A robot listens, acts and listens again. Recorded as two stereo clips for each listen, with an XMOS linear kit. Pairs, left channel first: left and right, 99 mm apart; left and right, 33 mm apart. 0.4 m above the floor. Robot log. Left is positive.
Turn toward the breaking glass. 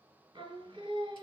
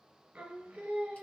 cmd idle
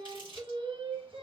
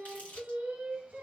cmd idle
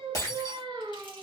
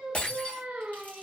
note: The breaking glass: about 40° left or 140° left.
cmd yaw +40
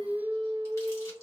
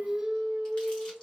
cmd idle
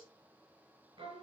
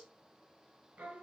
end: I heard breaking glass, but can't make it out now. It was about straight ahead or 100° left.